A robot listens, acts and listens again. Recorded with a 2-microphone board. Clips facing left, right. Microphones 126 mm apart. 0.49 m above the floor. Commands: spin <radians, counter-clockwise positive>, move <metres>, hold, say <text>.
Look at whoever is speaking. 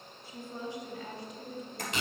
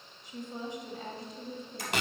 spin -0.61
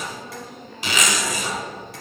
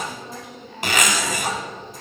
spin -0.26
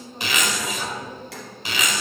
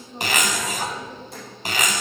spin -0.26
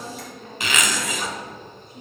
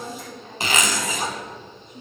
spin -0.26
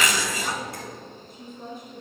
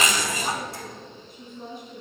say Found it: a woman speaking, straight ahead, over 4 m away.